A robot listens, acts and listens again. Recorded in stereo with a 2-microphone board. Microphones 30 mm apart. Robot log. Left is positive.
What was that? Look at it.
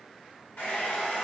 cmd yaw +90
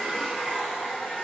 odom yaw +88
note: So it is at 15° left.
cmd yaw +15
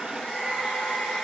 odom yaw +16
end: Found it: a hair dryer, straight ahead.